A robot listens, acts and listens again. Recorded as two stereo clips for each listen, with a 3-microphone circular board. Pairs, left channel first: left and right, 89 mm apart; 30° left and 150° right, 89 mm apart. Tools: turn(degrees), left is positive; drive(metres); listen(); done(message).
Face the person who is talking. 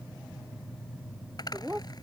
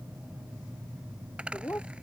turn(degrees=-30)
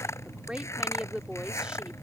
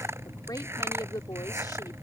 turn(degrees=-10)
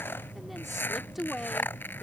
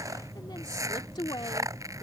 done("Facing the woman speaking.")